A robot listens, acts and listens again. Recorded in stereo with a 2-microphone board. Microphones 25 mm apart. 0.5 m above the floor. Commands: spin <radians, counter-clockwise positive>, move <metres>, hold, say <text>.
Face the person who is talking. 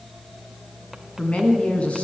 spin 1.05
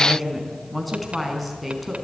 say Found it: a woman speaking, straight ahead.